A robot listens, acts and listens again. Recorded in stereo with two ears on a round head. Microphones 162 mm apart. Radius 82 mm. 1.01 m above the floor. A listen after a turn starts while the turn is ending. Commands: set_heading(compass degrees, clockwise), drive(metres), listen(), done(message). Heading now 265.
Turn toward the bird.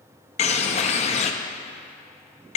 set_heading(225)
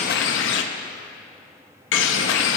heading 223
set_heading(123)
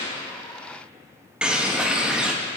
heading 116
done("Found it: a bird, straight ahead, under 1 m away.")